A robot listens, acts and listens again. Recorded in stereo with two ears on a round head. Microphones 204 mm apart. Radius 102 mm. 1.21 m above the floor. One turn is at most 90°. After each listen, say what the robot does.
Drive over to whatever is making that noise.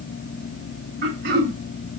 Turn 50° right.
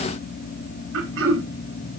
Turn 75° right.
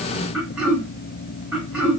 Drive 1.0 m forward.
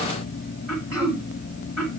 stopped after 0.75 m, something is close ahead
I am next to the throat clearing.